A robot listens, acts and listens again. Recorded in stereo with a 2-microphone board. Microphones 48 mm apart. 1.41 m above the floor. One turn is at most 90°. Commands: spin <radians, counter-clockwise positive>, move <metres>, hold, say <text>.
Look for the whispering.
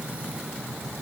hold
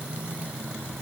hold
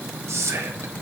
spin -1.13
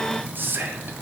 spin -0.87
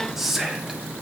say Facing the whispering.